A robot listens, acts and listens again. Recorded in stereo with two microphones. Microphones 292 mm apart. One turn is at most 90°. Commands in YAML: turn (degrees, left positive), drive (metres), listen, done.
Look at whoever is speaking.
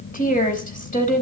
turn: 25
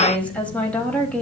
done: "Found it: a woman speaking, straight ahead."